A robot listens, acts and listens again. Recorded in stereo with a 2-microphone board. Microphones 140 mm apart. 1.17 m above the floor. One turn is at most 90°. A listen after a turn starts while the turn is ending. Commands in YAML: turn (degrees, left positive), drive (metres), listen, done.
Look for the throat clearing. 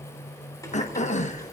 turn: 55
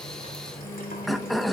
done: "Found it: throat clearing, straight ahead, 1 to 2 m away."